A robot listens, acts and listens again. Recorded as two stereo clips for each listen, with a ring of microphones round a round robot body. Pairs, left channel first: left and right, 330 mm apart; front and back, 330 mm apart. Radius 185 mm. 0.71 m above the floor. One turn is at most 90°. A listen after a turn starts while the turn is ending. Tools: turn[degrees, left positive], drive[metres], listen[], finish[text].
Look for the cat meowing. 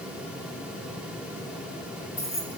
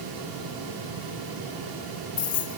Action: listen[]
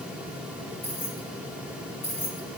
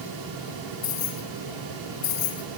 Action: listen[]
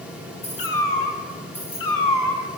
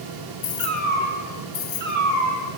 Thought: The cat meowing: 115° left.
Action: turn[90]
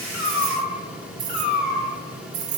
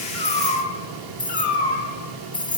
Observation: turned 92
Thought: The cat meowing is now 25° left.
Action: turn[25]
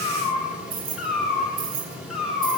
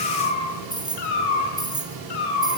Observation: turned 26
Action: finish[Found it: a cat meowing, straight ahead, over 4 m away.]